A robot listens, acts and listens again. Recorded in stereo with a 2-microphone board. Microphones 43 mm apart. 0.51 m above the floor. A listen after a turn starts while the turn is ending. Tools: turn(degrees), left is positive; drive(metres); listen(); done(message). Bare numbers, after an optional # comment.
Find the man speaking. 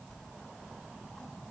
listen()
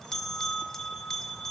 listen()
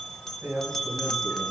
# The man speaking: about 70° right or 110° right.
turn(-70)
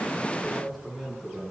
done("Found it: a man speaking, straight ahead, over 4 m away.")